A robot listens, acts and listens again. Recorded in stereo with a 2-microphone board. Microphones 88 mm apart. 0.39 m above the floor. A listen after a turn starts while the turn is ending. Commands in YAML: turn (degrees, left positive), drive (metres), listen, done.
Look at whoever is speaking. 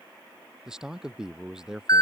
turn: -30
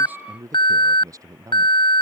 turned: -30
turn: -140
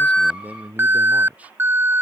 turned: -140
turn: -15
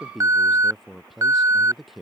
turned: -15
done: "Facing the man speaking."